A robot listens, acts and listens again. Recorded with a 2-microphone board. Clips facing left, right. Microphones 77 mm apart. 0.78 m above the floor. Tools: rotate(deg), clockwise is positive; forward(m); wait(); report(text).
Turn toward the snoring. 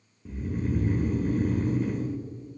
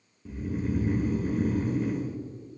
rotate(-30)
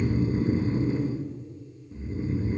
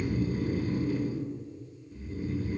rotate(-150)
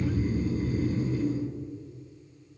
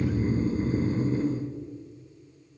rotate(40)
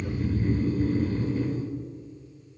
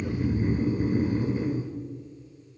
rotate(20)
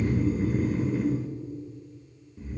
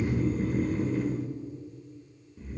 report("Found it: snoring, straight ahead.")